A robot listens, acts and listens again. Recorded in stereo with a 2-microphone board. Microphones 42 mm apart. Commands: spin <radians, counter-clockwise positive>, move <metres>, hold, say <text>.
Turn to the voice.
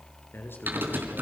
spin 1.05
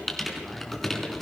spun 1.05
hold
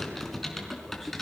hold
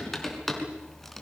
say I heard a man speaking, but can't make it out now. It was about straight ahead or 60° left.